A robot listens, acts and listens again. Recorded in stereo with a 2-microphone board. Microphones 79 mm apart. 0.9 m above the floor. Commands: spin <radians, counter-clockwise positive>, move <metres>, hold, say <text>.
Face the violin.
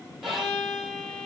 spin -0.52
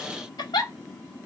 hold
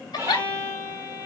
spin -2.44
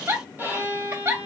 spin -0.44
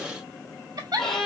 spin 0.17
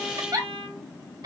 say Found it: a violin, straight ahead, 2 to 4 m away.